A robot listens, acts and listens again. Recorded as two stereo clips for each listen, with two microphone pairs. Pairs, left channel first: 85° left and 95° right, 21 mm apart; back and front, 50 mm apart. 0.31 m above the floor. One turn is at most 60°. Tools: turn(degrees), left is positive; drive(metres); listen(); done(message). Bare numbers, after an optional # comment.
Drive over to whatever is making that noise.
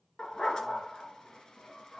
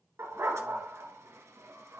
# The dog barking: 25° left.
turn(25)
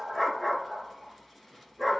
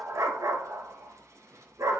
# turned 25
drive(1.0)
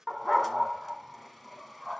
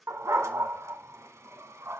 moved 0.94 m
# The dog barking is now 10° right.
turn(-10)
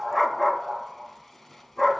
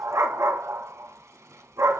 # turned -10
drive(1.0)
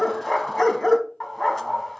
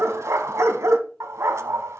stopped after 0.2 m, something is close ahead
done("I am next to the dog barking.")